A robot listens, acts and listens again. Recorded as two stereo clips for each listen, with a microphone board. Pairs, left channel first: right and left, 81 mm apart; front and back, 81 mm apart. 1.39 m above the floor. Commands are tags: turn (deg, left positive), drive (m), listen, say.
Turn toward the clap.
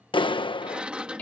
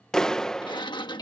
<turn deg="-85"/>
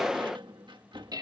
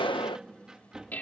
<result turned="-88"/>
<say>Found it: a clap, straight ahead.</say>